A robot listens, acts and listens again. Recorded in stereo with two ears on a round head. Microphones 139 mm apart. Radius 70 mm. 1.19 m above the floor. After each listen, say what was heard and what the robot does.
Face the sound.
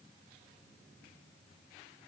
Keep listening.
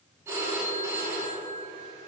The phone ringing: about 20° right or 160° right. Turn 20° right.
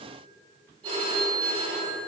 So it is at 145° right. Turn 145° right.
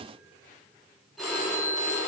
Facing the phone ringing.